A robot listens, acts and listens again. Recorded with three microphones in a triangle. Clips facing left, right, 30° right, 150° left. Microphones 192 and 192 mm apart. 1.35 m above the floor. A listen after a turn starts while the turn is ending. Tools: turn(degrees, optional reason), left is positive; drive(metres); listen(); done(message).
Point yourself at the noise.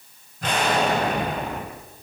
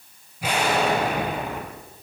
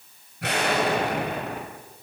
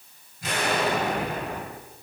turn(degrees=-10, reason="The explosion: 10° right.")
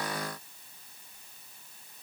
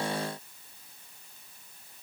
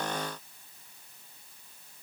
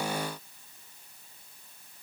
done("I heard an explosion from this way, but can't make it out now.")